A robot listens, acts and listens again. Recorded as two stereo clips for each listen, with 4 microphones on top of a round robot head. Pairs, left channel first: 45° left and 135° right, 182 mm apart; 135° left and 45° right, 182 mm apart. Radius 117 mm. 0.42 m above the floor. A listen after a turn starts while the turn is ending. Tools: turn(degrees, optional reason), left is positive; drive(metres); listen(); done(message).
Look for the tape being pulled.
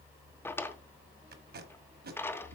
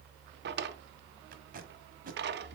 turn(degrees=-95, reason="The tape being pulled: 95° right.")
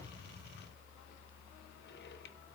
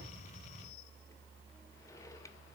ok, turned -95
listen()
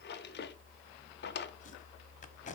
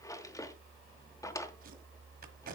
done("Facing the tape being pulled.")